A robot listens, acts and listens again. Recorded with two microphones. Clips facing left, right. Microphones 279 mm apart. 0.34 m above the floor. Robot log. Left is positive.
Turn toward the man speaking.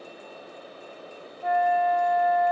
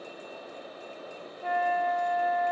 cmd idle
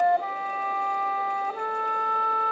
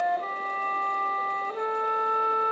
cmd idle
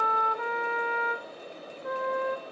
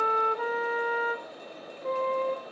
end: I can't make out a man speaking, only a flute.